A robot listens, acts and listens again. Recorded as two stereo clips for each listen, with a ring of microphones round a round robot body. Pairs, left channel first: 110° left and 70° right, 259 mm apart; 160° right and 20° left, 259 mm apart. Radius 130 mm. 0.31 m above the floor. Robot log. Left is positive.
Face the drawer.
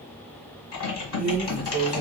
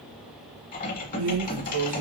end: Facing the drawer.